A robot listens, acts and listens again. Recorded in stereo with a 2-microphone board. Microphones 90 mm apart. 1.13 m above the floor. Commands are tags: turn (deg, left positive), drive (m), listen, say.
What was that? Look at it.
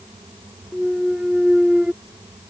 <turn deg="-30"/>
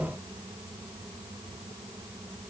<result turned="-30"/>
<listen/>
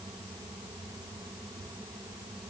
<say>I heard a clunk, but can't make it out now. It was about 20° left or 140° right.</say>